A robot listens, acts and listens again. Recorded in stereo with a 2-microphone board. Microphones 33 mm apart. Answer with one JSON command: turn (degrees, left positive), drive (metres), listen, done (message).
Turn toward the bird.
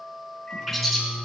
{"turn": 30}
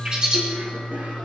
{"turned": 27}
{"turn": -30}
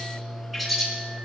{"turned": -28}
{"done": "Facing the bird."}